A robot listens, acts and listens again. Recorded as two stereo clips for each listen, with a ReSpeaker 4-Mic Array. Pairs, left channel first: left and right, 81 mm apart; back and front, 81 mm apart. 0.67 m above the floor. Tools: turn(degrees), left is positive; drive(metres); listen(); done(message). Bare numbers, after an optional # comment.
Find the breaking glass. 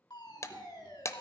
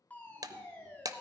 # The breaking glass: 40° left.
turn(40)
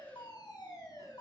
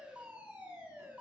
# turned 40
done("Facing where the breaking glass came from. I can't hear it now.")